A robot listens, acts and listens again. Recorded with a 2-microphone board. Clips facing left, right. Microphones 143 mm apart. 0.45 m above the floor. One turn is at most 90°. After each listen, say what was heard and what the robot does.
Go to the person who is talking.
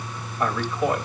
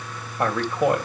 The man speaking: about 60° right or 120° right. Turn 60° right.
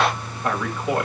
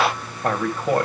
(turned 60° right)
So it is at 50° right. Turn 50° right.
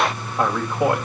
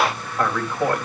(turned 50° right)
The man speaking is now 15° left. Turn 15° left.
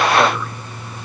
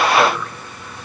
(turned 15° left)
Keep listening.
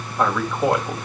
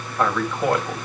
Drive 1.0 m forward.
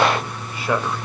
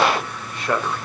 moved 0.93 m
Drive 1.0 m forward.
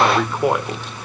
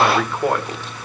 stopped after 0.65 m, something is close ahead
The man speaking is now 10° left. Turn 10° left.
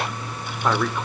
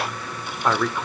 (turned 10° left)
I am next to the man speaking.